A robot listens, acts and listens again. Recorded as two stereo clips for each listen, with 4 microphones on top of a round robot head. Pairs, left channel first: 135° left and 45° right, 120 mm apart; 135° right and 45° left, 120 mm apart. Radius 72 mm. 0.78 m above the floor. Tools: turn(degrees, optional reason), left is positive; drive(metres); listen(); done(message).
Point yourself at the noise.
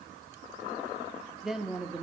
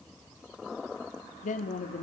turn(degrees=-125, reason="The woman speaking: 125° right.")
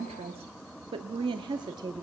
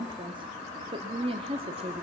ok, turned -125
turn(degrees=10, reason="The woman speaking is now 10° left.")
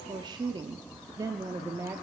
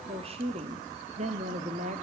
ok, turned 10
turn(degrees=25, reason="The woman speaking is now 25° left.")
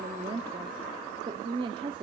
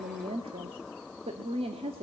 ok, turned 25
done("Facing the woman speaking, 1 to 2 m away.")